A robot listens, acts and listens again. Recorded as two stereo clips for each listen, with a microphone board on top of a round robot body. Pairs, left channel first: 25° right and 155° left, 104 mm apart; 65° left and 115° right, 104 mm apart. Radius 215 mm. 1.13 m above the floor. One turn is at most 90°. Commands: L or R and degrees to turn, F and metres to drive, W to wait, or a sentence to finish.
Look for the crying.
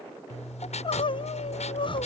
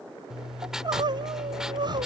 R65
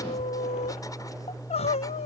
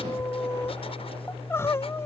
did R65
Found it: crying, straight ahead.